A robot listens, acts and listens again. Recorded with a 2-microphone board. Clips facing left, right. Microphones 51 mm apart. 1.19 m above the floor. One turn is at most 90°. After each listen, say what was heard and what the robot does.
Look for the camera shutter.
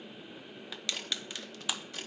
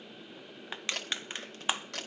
Turn 90° right.
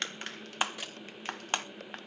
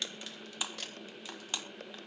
So it is at 10° left. Turn 10° left.
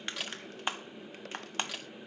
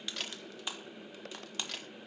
Facing the camera shutter.